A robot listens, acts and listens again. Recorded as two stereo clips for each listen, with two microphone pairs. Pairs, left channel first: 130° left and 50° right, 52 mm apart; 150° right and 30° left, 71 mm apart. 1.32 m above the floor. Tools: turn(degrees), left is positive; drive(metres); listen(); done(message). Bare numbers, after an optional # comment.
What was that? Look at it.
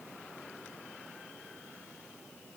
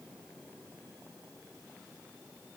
listen()
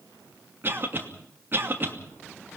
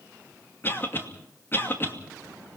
# The cough: 95° right.
turn(-95)
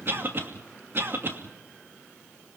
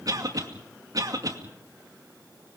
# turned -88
done("Found it: a cough, straight ahead.")